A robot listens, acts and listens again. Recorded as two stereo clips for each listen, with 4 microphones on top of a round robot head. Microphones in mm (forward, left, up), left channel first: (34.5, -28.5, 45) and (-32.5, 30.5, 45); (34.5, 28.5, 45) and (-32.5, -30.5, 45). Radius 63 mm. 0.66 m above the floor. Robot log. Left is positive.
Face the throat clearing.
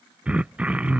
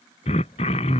note: The throat clearing: 60° left.
cmd yaw +60
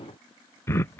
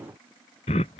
note: The throat clearing is now 25° left.
cmd yaw +25
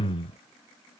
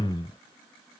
end: Found it: throat clearing, straight ahead.